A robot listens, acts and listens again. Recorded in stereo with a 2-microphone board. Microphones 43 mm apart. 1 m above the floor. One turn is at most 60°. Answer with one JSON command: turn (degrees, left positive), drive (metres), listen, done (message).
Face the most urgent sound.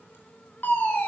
{"turn": 45}
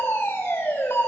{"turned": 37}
{"turn": 60}
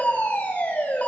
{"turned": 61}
{"turn": 35}
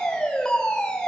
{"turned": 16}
{"turn": 20}
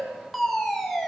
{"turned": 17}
{"done": "Facing the fire alarm."}